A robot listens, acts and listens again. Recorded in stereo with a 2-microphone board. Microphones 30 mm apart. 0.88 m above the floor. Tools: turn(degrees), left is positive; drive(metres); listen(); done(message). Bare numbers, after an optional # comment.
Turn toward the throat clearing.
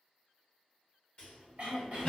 # The throat clearing: about 50° right or 130° right.
turn(-50)
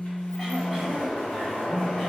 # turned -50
listen()
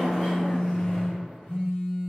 listen()
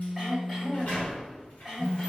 done("Facing the throat clearing.")